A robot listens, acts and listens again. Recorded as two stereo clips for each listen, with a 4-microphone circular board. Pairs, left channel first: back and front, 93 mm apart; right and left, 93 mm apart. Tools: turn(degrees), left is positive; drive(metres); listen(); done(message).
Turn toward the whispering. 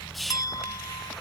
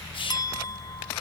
turn(degrees=-90)
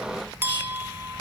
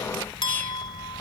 listen()
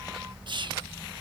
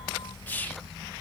turn(degrees=-20)
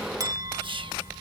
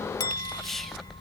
done("Facing the whispering.")